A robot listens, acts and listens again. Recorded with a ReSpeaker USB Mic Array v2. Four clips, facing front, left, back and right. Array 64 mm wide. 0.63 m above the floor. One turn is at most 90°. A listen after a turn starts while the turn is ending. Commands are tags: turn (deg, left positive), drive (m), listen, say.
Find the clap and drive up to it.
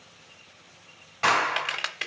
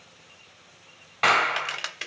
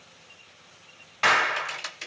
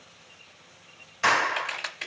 <turn deg="90"/>
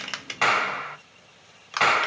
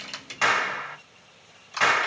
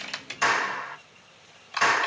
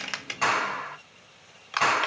<turn deg="15"/>
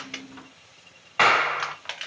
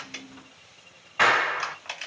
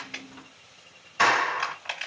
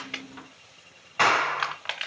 <drive m="1.0"/>
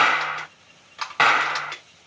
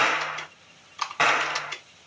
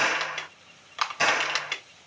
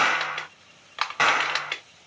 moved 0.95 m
<drive m="1.0"/>
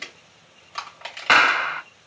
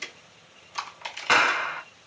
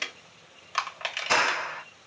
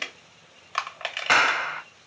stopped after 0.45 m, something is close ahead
<say>Arrived at the clap, straight ahead.</say>